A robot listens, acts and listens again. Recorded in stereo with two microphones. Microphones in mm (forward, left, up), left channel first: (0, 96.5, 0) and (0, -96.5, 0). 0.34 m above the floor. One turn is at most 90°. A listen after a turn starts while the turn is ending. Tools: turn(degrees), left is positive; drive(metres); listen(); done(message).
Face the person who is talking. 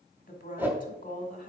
turn(degrees=45)
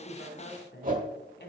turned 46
turn(degrees=80)
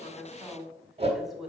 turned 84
done("Facing the woman speaking, 1 to 2 m away.")